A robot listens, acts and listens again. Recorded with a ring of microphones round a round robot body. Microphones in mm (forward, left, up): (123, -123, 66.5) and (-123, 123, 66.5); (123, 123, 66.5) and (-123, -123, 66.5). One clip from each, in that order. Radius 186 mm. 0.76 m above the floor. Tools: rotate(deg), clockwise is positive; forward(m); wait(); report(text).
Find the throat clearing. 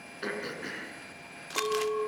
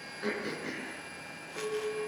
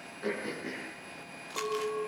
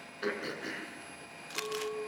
rotate(105)
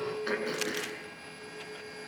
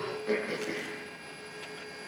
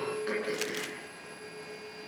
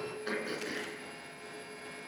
rotate(55)
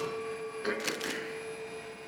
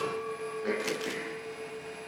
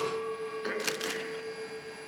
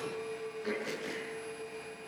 rotate(10)
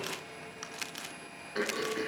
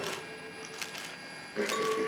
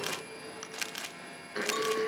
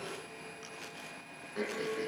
report("Facing the throat clearing.")